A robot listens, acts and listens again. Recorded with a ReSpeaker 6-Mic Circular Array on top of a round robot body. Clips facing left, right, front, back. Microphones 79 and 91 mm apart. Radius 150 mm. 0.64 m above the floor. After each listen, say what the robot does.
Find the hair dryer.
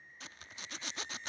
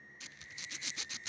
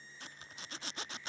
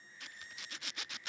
Keep listening.
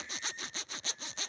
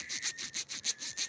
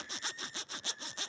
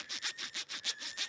Keep listening.
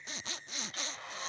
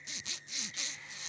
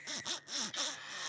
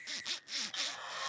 Turn 130° left.
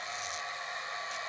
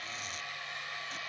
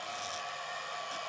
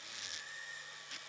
Turn 25° left.
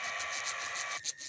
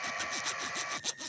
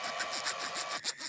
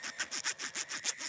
Facing the hair dryer.